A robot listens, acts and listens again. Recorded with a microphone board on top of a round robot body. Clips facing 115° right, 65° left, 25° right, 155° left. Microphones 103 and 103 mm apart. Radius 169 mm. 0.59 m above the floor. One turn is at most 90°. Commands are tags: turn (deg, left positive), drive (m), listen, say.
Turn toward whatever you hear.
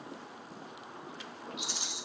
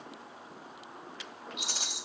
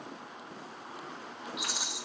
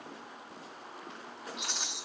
<turn deg="60"/>
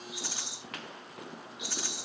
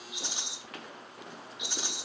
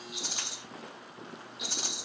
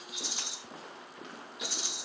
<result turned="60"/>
<say>Found it: a rattle, straight ahead.</say>